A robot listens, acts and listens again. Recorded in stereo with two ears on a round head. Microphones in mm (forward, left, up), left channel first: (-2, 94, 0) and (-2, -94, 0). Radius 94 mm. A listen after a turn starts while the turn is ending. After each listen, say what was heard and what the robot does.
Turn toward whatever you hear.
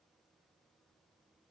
Keep listening.
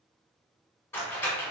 Turn 30° left.
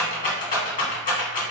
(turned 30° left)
So it is at 140° left. Turn 140° left.
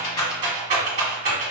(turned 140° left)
The rattle is now 35° right. Turn 35° right.
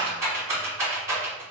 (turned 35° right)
The rattle is now 15° right. Turn 15° right.
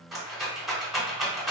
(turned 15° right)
Found it: a rattle, straight ahead, 1 to 2 m away.